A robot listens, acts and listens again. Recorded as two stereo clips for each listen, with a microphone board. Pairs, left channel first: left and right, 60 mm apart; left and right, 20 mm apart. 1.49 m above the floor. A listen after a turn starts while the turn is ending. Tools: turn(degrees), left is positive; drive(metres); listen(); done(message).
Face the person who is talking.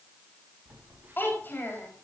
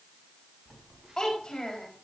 turn(degrees=35)
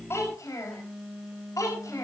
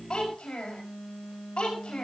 turn(degrees=110)
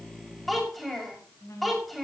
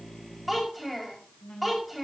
done("Found it: a child speaking, straight ahead, over 4 m away.")